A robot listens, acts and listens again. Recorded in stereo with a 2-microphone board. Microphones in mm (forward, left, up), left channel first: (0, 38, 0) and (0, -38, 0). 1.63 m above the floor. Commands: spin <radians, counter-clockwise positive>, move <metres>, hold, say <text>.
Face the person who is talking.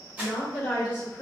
spin 0.61
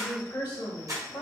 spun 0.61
spin 1.92
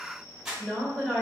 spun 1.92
say Found it: a woman speaking, straight ahead.